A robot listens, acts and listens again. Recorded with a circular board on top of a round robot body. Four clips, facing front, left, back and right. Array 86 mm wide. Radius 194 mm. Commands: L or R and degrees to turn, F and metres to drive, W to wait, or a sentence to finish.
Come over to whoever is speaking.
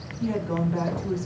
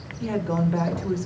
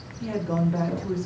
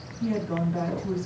L95
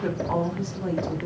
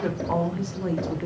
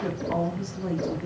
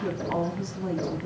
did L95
L60
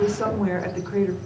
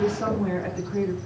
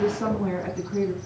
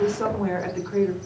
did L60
R30
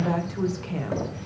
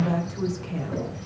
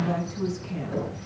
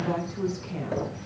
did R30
L10
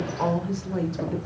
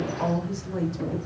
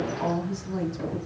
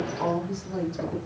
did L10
F1.0
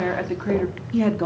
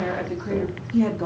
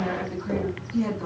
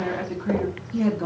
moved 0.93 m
F1.0
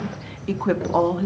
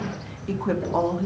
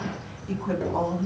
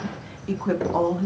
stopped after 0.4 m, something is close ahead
I am next to the woman speaking.